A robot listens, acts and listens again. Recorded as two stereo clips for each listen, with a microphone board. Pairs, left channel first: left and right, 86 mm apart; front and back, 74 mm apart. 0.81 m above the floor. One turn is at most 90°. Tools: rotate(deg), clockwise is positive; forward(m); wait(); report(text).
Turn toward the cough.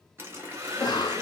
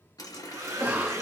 rotate(-90)
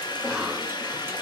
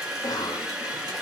report("Found it: a cough, straight ahead, under 1 m away.")